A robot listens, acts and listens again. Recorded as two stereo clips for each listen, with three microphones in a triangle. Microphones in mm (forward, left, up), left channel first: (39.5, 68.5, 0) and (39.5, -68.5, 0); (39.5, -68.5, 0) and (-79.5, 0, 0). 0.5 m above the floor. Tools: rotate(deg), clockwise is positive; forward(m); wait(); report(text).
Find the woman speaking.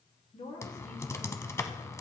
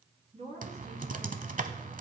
rotate(-115)
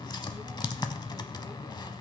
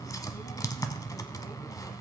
wait()
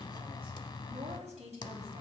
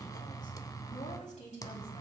rotate(55)
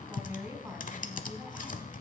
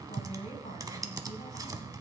rotate(10)
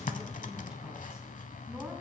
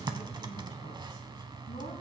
wait()
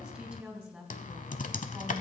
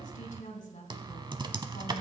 report("Found it: a woman speaking, straight ahead, 2 to 4 m away.")